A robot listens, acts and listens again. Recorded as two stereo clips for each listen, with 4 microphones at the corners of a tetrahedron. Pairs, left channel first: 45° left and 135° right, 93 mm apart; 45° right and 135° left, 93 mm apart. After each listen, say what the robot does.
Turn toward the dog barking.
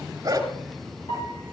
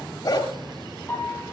Turn 85° right.
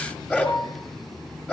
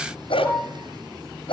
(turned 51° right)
Turn 30° right.
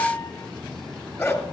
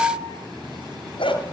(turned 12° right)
Turn 20° right.
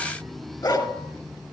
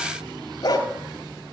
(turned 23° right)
Facing the dog barking, 2 to 4 m away.